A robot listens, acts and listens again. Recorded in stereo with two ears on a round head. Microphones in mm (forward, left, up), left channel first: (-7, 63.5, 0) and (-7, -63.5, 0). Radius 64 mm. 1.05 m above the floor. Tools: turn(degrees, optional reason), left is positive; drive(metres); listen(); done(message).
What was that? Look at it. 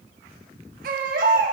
turn(degrees=-60, reason="The baby crying: about 60° right or 120° right.")
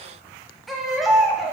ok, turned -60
done("Found it: a baby crying, straight ahead, 1 to 2 m away.")